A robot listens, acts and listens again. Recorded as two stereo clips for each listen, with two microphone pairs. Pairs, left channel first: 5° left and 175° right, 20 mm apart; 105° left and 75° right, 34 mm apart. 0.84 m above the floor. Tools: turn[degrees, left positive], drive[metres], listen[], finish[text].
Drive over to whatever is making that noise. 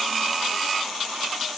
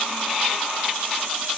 Action: listen[]
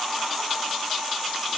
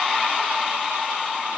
Action: listen[]
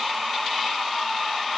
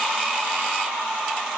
Action: finish[I can't make out anything to turn to.]